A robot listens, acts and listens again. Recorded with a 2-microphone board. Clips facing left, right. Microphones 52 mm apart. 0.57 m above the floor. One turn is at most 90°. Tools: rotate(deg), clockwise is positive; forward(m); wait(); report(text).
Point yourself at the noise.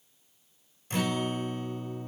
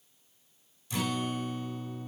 rotate(-45)
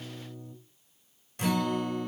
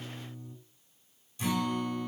rotate(-80)
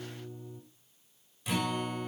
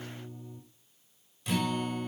report("Found it: a guitar, straight ahead, 2 to 4 m away.")